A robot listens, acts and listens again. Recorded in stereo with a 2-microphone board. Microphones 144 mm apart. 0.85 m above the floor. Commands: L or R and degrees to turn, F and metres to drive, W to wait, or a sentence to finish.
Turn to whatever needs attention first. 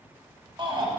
R35
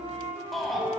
Facing the shout, 1 to 2 m away.